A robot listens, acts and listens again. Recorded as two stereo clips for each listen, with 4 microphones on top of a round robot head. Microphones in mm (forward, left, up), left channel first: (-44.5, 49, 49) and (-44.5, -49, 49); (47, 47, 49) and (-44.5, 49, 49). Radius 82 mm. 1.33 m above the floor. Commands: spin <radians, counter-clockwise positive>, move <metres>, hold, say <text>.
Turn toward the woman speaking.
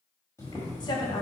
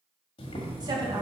spin 2.36
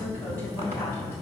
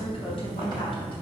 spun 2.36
spin 0.26
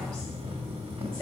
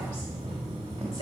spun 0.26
spin 0.17
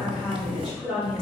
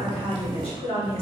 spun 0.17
say Found it: a woman speaking, straight ahead, 2 to 4 m away.